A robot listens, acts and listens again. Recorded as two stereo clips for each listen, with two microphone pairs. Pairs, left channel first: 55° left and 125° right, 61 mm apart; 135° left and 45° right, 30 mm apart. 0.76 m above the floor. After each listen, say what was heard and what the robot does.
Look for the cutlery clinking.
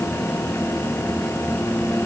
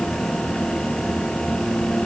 Keep listening.
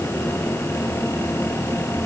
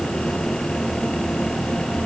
Keep listening.
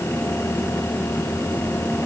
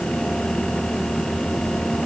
I can't make out cutlery clinking to turn to.